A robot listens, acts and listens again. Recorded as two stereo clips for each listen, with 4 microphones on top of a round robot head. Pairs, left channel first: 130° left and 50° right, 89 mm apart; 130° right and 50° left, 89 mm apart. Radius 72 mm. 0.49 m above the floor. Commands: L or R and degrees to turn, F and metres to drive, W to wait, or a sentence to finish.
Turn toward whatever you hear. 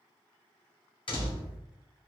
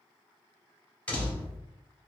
L155
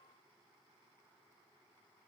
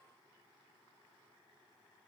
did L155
I heard a door slam from this way, but can't make it out now.